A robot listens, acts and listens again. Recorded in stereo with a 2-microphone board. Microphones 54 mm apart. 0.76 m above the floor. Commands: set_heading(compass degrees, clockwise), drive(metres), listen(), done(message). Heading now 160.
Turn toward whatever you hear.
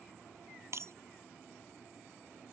set_heading(220)
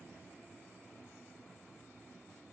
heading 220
listen()
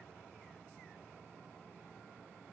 done("I heard breaking glass, but can't make it out now. It was about straight ahead or 60° right.")